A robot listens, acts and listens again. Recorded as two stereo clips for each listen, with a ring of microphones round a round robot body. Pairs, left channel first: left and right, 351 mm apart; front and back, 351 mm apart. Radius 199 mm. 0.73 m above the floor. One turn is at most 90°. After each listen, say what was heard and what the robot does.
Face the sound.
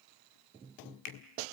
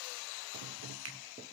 The finger snap: 125° left. Turn 90° left.
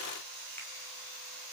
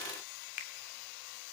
Nothing new. It was at 35° left. Turn 35° left.
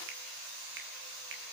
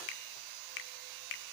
The finger snap is now 25° right. Turn 25° right.
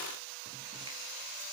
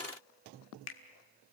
Keep listening.
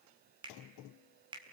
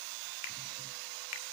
The finger snap is now 10° right. Turn 10° right.
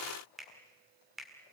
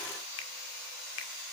Found it: a finger snap, straight ahead.